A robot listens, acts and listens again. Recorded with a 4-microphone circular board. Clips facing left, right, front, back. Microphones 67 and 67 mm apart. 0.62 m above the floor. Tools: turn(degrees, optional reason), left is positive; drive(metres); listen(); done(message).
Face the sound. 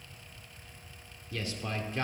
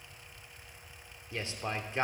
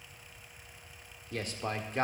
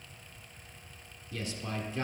turn(degrees=-30, reason="The man speaking: 30° right.")
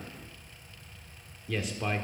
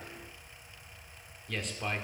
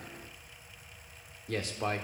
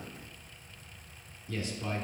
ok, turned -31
done("Found it: a man speaking, straight ahead, 1 to 2 m away.")